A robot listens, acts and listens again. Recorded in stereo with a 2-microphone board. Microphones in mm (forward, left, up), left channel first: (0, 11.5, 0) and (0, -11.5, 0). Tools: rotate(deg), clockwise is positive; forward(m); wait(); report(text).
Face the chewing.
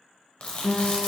rotate(-65)
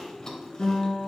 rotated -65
rotate(-25)
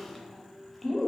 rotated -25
rotate(-10)
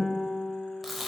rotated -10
report("Facing the chewing, under 1 m away.")